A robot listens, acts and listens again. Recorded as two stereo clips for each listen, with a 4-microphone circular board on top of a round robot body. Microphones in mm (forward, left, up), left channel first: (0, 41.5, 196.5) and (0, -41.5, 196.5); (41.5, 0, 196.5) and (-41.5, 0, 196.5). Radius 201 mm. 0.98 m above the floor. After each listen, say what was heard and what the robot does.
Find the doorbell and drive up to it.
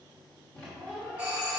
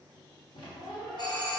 The doorbell: 15° right. Turn 15° right.
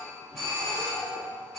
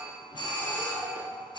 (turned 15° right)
Drive 1.0 m forward.
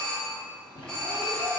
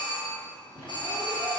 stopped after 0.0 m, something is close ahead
Blocked. The doorbell is further on, straight ahead.